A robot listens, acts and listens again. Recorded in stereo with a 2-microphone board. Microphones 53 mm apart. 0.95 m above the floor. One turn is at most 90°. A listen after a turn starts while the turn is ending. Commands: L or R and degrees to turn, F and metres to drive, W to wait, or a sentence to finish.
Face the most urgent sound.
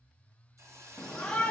L15
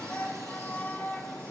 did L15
L90
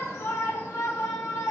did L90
L85
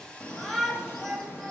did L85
Found it: a shout, straight ahead, 1 to 2 m away.